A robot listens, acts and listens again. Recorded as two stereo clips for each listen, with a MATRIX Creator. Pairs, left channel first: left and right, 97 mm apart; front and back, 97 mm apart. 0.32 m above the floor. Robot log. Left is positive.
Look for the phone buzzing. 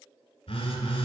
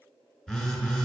note: The phone buzzing: 85° left.
cmd yaw +85
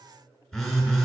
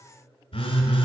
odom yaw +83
end: Found it: a phone buzzing, straight ahead.